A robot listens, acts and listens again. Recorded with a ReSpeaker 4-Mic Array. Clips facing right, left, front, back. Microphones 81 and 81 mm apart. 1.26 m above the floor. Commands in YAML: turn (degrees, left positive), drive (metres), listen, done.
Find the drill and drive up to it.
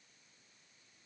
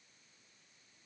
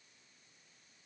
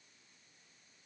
listen: true
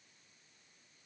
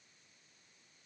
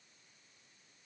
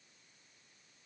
listen: true
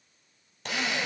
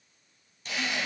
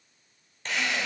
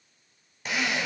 turn: -100
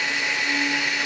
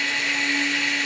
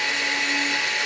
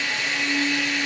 turn: -15
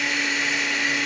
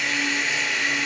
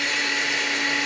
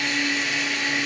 drive: 1.0
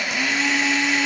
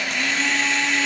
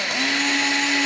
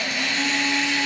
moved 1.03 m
drive: 1.0
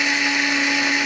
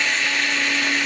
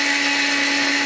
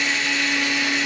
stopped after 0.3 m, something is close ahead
turn: -15
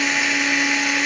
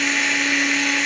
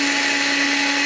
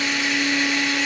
done: "Arrived at the drill, straight ahead."